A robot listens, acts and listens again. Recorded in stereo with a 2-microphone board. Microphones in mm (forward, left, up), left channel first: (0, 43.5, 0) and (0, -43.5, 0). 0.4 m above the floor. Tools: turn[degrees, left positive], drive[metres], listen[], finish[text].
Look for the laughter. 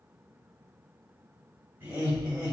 Thought: The laughter: about 20° right or 160° right.
Action: turn[-20]
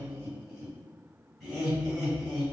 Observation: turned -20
Action: finish[Found it: laughter, straight ahead.]